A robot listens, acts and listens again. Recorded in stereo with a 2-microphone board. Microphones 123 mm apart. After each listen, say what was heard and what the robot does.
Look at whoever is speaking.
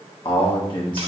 The man speaking: about 45° left or 135° left. Turn 45° left.
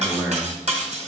So it is at 10° right. Turn 10° right.
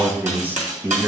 The man speaking is now 20° right. Turn 20° right.
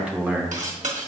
The man speaking is now 15° right. Turn 15° right.
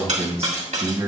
The man speaking is now 25° right. Turn 25° right.
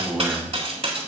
The man speaking is now 10° right. Turn 10° right.
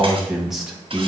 Facing the man speaking, 1 to 2 m away.